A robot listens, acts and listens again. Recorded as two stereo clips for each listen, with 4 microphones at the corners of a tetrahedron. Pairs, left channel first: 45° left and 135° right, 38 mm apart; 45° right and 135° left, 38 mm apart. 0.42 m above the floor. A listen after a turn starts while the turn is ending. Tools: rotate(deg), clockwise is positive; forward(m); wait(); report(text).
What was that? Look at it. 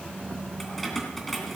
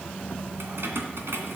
rotate(-130)
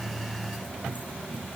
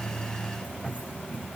wait()
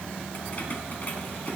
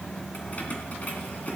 report("Facing the keys jangling, 2 to 4 m away.")